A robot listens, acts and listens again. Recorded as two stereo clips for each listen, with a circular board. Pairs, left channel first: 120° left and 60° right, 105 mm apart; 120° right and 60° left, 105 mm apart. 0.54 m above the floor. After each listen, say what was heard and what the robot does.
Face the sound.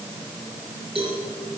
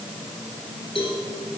The cowbell: 90° right. Turn 90° right.
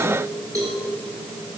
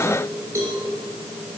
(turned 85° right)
Found it: a cowbell, straight ahead, 2 to 4 m away.